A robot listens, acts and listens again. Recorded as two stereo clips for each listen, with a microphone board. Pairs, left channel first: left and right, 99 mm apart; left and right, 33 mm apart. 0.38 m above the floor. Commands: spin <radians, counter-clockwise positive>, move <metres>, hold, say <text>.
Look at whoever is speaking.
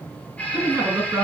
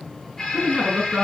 spin -0.44
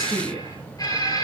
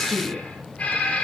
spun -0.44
say Facing the woman speaking.